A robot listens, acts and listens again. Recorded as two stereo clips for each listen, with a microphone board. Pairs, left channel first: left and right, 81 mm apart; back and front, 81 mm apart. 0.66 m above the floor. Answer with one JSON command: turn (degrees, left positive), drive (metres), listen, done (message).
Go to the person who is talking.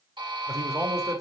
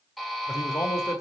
{"turn": -140}
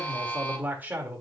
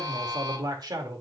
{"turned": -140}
{"turn": -25}
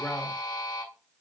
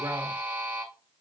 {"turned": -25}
{"listen": true}
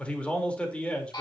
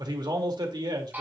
{"turn": 15}
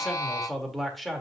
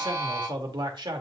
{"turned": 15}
{"drive": 1.0}
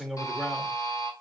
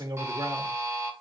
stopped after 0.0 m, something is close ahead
{"done": "Blocked. The man speaking is further on, straight ahead."}